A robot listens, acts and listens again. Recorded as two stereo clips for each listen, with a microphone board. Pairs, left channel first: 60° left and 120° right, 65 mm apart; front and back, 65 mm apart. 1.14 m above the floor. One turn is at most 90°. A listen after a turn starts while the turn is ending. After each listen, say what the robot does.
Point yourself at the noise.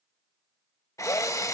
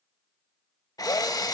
Turn 20° left.
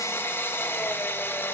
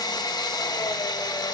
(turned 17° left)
Found it: a drill, straight ahead, 1 to 2 m away.